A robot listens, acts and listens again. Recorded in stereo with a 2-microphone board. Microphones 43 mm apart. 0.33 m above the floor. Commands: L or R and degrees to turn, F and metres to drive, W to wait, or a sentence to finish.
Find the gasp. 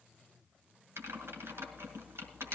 W
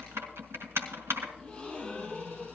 L25
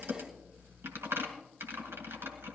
W
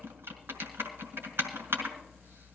I heard a gasp, but can't make it out now. It was about straight ahead or 130° left.